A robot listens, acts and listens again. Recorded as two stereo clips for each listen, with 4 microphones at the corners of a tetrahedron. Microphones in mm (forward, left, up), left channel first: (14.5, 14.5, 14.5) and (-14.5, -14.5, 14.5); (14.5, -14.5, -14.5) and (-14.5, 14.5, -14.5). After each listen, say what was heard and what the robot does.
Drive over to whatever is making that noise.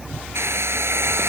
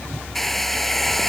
The hair dryer: 130° right. Turn 130° right.
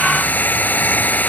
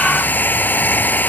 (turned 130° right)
Drive 1.0 m forward.
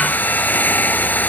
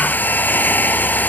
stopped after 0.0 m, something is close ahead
Something is in my way. I am facing the hair dryer but have not reached it.